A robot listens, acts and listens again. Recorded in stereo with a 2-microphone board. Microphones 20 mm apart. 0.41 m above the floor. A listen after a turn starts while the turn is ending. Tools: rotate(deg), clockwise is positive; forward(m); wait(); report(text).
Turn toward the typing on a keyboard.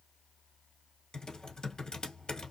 rotate(-35)
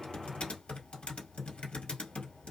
rotate(-105)
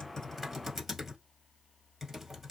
rotate(10)
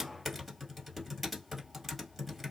report("Facing the typing on a keyboard, 1 to 2 m away.")